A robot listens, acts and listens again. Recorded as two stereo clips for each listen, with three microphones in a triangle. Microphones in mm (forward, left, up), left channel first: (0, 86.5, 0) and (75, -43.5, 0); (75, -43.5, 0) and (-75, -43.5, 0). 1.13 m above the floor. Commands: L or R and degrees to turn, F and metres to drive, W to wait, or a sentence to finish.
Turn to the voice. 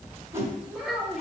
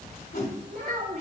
R145
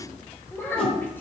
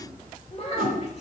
L45
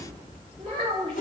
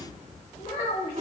R10
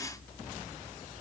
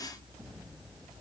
W
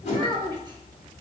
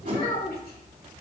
Found it: a child speaking, straight ahead, 1 to 2 m away.